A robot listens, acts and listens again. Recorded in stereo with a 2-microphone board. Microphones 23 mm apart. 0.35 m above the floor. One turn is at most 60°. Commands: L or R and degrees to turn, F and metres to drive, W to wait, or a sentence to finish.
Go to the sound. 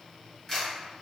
L20
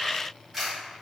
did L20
F1.0
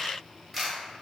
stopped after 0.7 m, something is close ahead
I am next to the camera shutter.